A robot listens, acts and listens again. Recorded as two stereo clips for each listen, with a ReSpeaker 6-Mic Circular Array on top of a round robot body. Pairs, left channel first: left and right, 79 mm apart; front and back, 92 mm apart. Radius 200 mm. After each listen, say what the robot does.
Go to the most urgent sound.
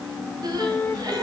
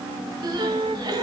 Turn 130° right.
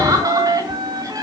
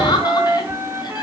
Turn 45° right.
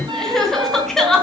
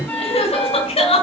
Drive 1.0 m forward.
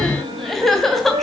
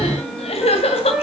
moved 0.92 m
Drive 1.0 m forward.
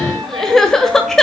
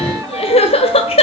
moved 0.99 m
Drive 1.0 m forward.
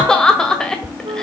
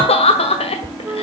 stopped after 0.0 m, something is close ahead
Turn 10° left.
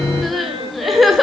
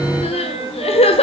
Arrived at the crying, straight ahead.